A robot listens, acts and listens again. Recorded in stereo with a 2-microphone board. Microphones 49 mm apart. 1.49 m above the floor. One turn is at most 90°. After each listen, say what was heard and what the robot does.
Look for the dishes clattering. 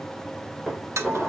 Turn 30° right.
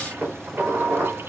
So it is at 145° right. Turn 90° right.
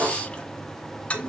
The dishes clattering is now 65° right. Turn 65° right.
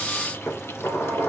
The dishes clattering is now 30° left. Turn 30° left.
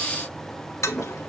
Keep listening.
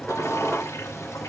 Facing the dishes clattering, over 4 m away.